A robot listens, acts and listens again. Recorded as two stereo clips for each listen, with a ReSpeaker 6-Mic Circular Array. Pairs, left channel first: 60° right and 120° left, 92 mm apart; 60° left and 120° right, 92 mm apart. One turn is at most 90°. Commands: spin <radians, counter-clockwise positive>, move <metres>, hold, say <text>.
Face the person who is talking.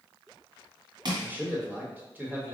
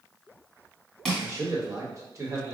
spin -1.57
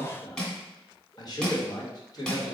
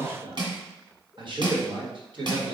spin -1.57
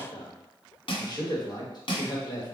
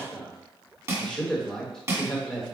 spin -0.44
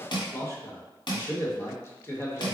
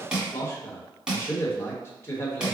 say Facing the man speaking.